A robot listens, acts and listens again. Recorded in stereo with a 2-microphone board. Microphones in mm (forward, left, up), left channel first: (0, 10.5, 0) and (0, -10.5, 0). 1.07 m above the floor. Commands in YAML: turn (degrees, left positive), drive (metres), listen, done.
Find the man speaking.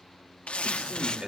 turn: -40
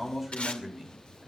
done: "Facing the man speaking, over 4 m away."